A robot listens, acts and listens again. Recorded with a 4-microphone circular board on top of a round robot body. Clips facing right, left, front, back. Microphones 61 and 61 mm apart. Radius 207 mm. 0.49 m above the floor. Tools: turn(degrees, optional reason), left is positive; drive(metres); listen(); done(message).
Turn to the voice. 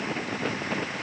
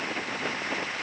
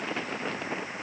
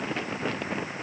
listen()
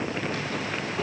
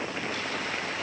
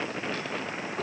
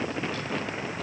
listen()
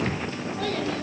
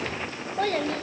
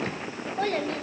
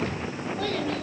turn(degrees=50, reason="The child speaking: 50° left.")
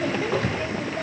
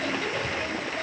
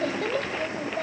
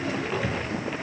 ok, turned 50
listen()
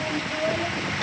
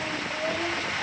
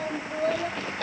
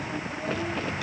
turn(degrees=-10, reason="The child speaking is now 10° right.")
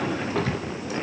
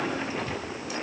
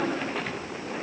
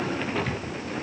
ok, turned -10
listen()
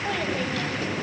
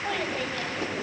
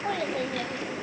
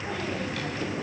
done("Facing the child speaking.")